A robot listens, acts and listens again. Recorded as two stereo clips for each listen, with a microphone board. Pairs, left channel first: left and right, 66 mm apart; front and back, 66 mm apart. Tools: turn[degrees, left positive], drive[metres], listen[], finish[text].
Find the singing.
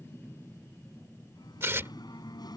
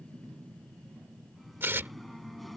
Thought: The singing: 90° left.
Action: turn[90]
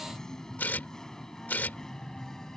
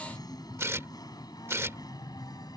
Thought: The singing is now 10° left.
Action: turn[10]
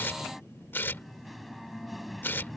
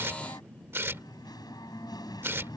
Action: finish[Facing the singing.]